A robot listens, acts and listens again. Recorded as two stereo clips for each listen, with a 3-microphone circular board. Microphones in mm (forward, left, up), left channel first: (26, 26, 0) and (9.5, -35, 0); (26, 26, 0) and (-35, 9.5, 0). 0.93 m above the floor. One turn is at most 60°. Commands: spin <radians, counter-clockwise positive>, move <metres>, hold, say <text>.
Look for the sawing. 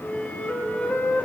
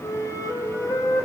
hold
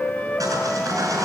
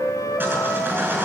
spin -1.05
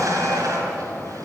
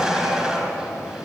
spin -1.05
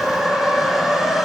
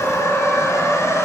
spin -0.26
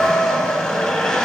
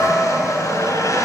say Found it: sawing, straight ahead.